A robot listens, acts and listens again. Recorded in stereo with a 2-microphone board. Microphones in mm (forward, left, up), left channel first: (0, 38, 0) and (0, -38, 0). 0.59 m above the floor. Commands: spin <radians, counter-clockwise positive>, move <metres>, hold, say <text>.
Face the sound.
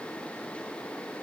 hold
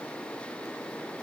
hold
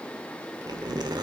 spin -1.13
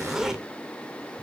say Found it: a zipper, straight ahead, 1 to 2 m away.